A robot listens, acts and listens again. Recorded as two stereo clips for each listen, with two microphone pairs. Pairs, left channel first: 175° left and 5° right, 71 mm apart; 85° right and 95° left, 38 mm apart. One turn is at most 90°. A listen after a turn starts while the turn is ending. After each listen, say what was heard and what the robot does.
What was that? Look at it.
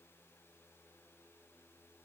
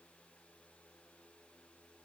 Keep listening.
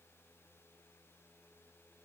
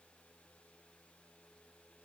Keep listening.
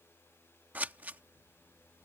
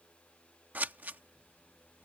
The scissors: 60° left. Turn 60° left.
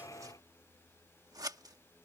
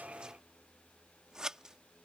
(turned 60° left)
The scissors is now 25° left. Turn 25° left.
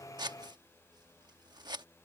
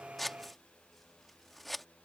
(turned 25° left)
Facing the scissors.